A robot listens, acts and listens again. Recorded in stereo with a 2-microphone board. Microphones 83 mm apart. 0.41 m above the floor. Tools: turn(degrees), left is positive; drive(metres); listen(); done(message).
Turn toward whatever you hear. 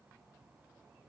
listen()
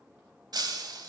turn(degrees=-60)
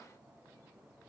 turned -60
listen()
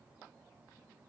done("I heard breaking glass, but can't make it out now. It was about straight ahead or 60° right.")